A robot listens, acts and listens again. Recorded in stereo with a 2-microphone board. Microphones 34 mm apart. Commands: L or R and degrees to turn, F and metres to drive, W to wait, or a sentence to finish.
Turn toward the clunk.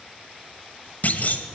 L50
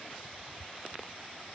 W
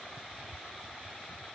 I heard a clunk, but can't make it out now. It was about straight ahead or 80° left.